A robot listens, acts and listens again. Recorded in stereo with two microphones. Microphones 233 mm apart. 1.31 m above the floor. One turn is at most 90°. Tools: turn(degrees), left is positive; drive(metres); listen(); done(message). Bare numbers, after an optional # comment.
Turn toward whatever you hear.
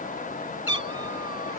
turn(90)
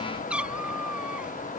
done("Found it: a cat meowing, straight ahead.")